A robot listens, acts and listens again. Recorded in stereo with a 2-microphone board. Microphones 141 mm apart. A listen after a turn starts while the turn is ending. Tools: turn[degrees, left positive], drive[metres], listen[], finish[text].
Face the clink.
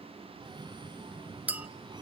Action: turn[-30]
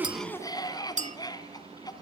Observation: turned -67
Thought: So it is at 100° right.
Action: turn[-100]
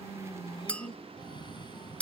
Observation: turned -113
Thought: The clink is now 10° left.
Action: turn[10]
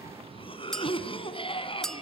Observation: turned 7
Action: finish[Found it: a clink, straight ahead, under 1 m away.]